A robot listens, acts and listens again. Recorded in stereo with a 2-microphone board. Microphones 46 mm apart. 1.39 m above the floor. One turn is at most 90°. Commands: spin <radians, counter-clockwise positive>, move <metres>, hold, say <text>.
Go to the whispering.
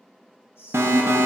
spin 1.13
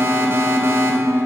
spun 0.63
hold
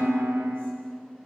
hold
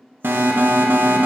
say I heard whispering, but can't make it out now. It was about 30° left or 80° left. I did not reach it.